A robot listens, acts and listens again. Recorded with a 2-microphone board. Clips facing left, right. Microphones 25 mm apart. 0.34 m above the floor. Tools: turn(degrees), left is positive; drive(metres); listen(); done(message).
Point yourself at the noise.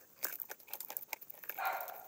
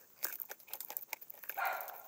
turn(degrees=-90)
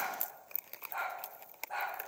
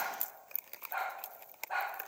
turn(degrees=-25)
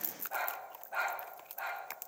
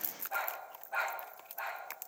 done("Found it: a dog barking, straight ahead, over 4 m away.")